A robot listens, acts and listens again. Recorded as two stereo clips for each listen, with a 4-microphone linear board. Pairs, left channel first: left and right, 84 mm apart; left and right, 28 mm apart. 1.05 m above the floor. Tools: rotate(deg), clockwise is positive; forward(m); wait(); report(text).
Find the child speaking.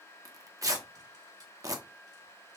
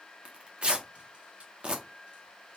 wait()
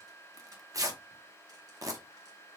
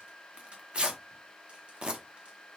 wait()
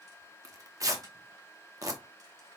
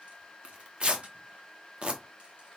report("I can't make out a child speaking to turn to.")